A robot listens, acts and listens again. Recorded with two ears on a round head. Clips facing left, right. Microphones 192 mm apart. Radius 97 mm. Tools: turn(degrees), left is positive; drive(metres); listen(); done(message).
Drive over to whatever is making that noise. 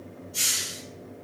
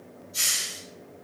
turn(degrees=30)
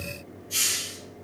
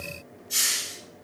turn(degrees=-20)
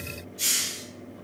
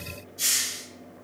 drive(metres=1.0)
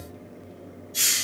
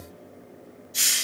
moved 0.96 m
drive(metres=1.0)
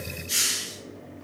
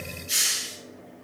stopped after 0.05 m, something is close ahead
turn(degrees=-10)
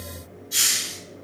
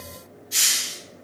done("Arrived at the hiss, straight ahead.")